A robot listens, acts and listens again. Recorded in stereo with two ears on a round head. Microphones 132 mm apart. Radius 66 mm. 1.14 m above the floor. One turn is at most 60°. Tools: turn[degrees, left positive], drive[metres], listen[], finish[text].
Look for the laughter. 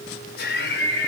Action: turn[60]
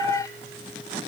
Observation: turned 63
Thought: Nothing new. It was at 25° left.
Action: turn[25]
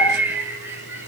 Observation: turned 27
Thought: The laughter is now 15° right.
Action: turn[-15]
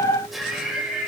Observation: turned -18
Action: finish[Found it: laughter, straight ahead.]